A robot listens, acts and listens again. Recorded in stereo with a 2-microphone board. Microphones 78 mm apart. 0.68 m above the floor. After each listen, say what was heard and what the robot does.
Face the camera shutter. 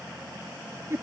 Keep listening.
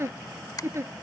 The camera shutter: about 55° left or 125° left. Turn 55° left.
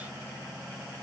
Keep listening.
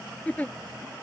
Keep listening.
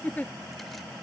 I heard a camera shutter, but can't make it out now. It was about straight ahead or 70° left.